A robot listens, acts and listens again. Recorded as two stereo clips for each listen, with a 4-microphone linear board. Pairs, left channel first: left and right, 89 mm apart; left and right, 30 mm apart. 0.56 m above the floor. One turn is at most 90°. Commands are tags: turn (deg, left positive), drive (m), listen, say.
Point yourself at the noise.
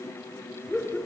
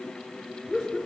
<turn deg="30"/>
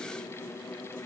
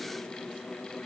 <listen/>
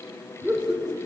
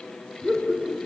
<turn deg="-30"/>
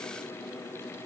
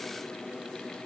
<listen/>
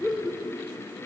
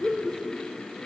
<say>Found it: laughter, straight ahead, 2 to 4 m away.</say>